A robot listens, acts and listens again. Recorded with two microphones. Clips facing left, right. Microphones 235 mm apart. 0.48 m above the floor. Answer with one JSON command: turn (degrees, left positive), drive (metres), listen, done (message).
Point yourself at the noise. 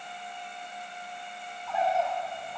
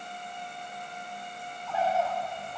{"turn": 30}
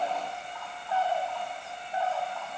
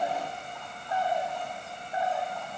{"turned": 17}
{"turn": -15}
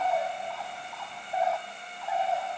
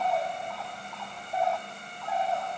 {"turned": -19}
{"done": "Facing the bird."}